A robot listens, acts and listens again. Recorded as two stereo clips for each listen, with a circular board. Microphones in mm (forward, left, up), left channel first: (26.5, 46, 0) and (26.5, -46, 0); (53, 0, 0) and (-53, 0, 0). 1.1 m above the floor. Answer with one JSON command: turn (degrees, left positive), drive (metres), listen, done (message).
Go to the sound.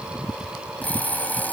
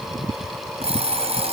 {"turn": 165}
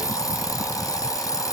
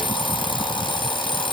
{"turn": 40}
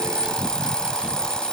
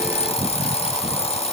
{"turn": 10}
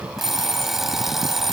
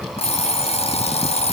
{"drive": 1.0}
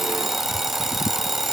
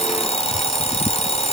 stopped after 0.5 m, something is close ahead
{"done": "Something is in my way. I am facing the alarm clock but have not reached it."}